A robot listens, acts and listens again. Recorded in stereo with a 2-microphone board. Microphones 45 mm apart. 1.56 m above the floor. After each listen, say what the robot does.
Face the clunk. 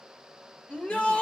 Keep listening.
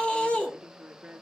Keep listening.
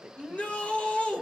I can't make out a clunk, only a woman speaking and a shout.